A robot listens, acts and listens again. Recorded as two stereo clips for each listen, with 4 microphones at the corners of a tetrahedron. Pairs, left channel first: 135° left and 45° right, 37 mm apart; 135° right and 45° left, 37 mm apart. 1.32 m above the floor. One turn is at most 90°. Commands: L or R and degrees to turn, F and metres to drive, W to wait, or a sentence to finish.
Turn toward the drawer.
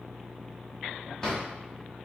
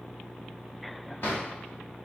R90
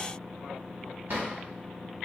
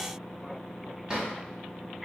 R30
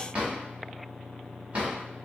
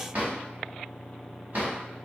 L10
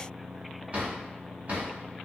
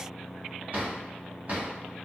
Facing the drawer, 1 to 2 m away.